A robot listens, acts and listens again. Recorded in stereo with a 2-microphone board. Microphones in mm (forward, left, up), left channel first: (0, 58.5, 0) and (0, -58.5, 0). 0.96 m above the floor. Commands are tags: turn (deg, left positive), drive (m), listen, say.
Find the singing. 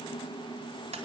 <listen/>
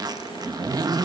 <listen/>
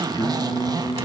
<turn deg="40"/>
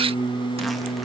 <turn deg="100"/>
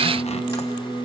<say>Facing the singing, over 4 m away.</say>